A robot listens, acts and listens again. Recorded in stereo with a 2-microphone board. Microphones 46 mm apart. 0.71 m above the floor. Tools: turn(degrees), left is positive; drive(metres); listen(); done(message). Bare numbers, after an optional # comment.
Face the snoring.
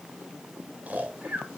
# The snoring: about 35° right or 145° right.
turn(-35)
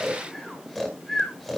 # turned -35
done("Facing the snoring.")